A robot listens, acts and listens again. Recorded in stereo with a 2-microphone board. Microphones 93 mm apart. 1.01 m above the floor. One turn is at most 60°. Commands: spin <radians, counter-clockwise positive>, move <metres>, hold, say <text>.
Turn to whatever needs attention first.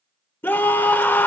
spin 0.44
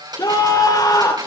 spin 1.05
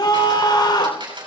spin 1.05
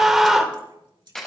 say Facing the scream, 2 to 4 m away.